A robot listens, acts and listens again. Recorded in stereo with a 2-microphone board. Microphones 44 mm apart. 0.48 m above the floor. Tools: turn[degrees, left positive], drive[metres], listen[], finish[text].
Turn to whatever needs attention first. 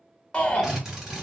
Thought: The shout: about 25° left or 155° left.
Action: turn[25]
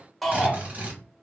Action: finish[Facing the shout.]